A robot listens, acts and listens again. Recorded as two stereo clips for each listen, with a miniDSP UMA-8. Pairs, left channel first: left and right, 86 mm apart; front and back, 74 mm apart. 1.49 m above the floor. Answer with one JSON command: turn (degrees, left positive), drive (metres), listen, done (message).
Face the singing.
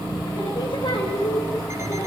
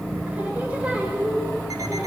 {"turn": 105}
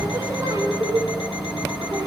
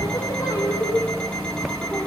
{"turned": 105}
{"turn": -40}
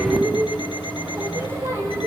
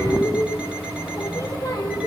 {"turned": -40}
{"turn": -30}
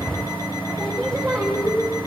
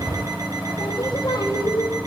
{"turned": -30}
{"done": "Found it: singing, straight ahead."}